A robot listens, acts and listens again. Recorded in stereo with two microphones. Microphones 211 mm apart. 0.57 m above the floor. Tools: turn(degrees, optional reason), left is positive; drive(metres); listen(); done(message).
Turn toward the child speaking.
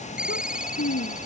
turn(degrees=90)
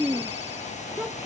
turn(degrees=-10, reason="So it is at 10° right.")
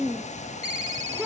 done("Facing the child speaking.")